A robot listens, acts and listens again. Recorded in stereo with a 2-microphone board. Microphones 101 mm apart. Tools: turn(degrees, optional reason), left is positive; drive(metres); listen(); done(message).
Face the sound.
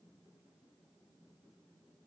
listen()
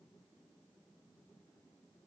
listen()
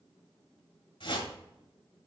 turn(degrees=60, reason="The whoosh: about 60° left or 120° left.")
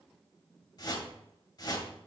turn(degrees=50, reason="So it is at 50° left.")
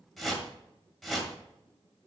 done("Found it: a whoosh, straight ahead, 1 to 2 m away.")